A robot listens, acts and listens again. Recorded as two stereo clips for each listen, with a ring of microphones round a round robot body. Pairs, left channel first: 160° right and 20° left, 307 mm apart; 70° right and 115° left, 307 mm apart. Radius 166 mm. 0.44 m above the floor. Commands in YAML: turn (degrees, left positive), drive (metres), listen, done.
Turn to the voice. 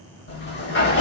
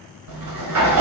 listen: true
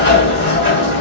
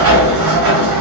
listen: true
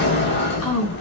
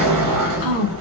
turn: -140
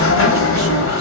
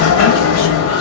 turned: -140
listen: true
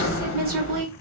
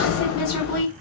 turn: -35
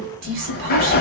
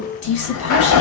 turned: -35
turn: -25
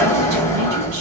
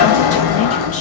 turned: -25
listen: true
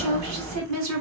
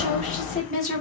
done: "Found it: a woman speaking, straight ahead, 2 to 4 m away."